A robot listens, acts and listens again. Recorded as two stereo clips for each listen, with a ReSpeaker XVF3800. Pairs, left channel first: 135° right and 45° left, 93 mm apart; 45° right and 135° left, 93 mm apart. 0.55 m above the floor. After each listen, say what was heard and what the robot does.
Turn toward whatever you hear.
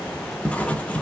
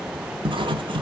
The writing: 150° left. Turn 150° left.
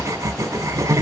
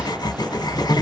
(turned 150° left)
The writing is now 10° right. Turn 10° right.
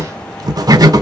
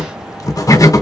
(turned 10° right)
Found it: writing, straight ahead, under 1 m away.